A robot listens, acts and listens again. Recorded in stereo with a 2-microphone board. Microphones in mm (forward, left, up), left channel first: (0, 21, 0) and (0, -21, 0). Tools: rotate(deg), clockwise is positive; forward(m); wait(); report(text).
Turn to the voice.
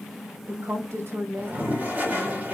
rotate(90)
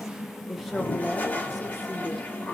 report("Found it: a woman speaking, straight ahead.")